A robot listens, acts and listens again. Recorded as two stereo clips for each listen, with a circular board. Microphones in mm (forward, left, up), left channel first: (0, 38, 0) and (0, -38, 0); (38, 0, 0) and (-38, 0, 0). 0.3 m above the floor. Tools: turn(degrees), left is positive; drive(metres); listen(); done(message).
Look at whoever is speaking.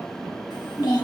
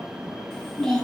turn(degrees=80)
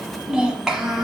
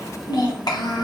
done("Found it: a child speaking, straight ahead.")